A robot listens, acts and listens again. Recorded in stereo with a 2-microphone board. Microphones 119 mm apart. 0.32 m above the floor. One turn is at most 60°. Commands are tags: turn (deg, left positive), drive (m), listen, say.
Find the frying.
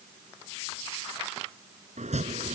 <listen/>
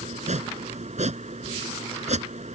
<listen/>
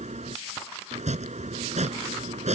<say>I can't make out frying to turn to.</say>